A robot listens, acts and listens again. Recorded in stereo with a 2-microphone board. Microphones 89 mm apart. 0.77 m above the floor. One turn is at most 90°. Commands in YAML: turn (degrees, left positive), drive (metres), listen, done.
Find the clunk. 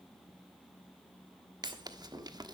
turn: -60
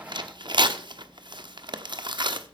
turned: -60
listen: true
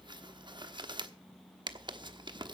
done: "I heard a clunk, but can't make it out now. It was about straight ahead or 60° right."